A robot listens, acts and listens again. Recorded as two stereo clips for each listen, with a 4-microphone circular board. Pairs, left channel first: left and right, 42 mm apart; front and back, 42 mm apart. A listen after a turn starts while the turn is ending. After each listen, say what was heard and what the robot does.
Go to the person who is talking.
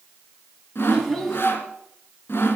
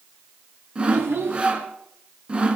The child speaking: 175° left. Turn 175° left.
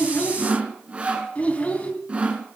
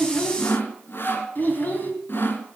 The child speaking is now 35° left. Turn 35° left.
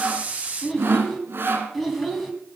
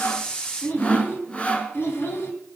Drive 1.0 m forward.
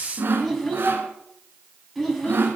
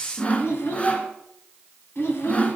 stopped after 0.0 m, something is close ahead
Blocked. The child speaking is further on, straight ahead.